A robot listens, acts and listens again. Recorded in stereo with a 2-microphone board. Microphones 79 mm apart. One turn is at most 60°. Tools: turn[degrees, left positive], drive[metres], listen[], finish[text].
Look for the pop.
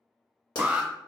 Action: turn[60]
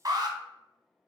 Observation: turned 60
Thought: Nothing new. It was at 30° left.
Action: turn[30]
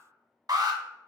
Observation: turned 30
Action: finish[I heard a pop from this way, but can't make it out now.]